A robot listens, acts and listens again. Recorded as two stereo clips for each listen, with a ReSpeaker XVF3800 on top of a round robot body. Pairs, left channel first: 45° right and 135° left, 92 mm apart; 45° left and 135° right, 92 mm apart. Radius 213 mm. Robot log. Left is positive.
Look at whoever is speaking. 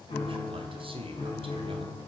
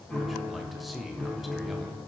note: The man speaking: 135° left.
cmd yaw +135
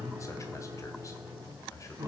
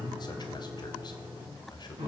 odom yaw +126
note: The man speaking is now 10° left.
cmd yaw +10
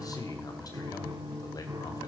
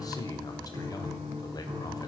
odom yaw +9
end: Found it: a man speaking, straight ahead.